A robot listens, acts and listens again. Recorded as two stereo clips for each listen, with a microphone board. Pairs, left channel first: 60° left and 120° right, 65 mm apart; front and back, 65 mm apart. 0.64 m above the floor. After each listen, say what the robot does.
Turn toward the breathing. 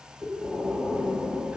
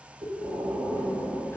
Turn 170° left.
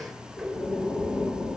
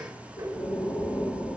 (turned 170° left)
Turn 10° left.
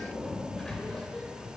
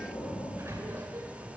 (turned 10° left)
Facing the breathing.